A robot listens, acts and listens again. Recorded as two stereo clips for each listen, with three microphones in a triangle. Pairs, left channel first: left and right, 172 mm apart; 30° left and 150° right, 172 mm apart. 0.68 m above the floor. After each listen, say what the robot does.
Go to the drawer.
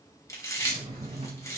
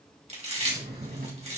Turn 145° right.
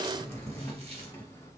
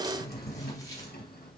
Turn 15° left.
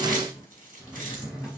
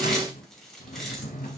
Drive 1.0 m forward.
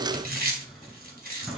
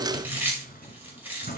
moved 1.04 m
Drive 1.0 m forward.
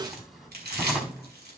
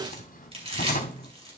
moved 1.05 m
Drive 1.0 m forward.
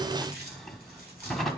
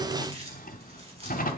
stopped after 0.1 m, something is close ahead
Arrived at the drawer, straight ahead.